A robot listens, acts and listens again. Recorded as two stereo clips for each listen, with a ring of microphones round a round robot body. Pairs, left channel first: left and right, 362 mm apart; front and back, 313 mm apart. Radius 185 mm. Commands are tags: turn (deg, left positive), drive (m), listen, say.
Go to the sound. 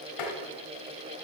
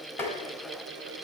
<turn deg="85"/>
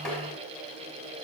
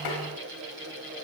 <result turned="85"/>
<drive m="1.0"/>
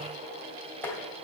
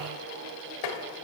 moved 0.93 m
<drive m="1.0"/>
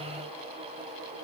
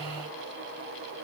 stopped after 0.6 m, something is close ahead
<turn deg="15"/>
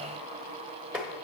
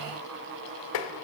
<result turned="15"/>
<say>I am next to the tapping.</say>